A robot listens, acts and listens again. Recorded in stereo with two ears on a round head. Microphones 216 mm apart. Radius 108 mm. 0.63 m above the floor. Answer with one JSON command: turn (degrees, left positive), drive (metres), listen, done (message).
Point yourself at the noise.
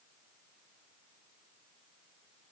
{"listen": true}
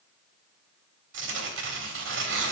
{"turn": -55}
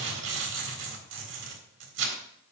{"turn": -65}
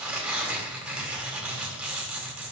{"done": "Found it: tearing paper, straight ahead."}